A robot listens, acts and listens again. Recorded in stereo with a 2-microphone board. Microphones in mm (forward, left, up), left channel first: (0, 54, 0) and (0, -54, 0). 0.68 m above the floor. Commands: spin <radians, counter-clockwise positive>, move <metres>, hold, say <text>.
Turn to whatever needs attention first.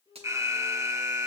spin -0.44
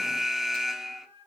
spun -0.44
say Facing the alarm.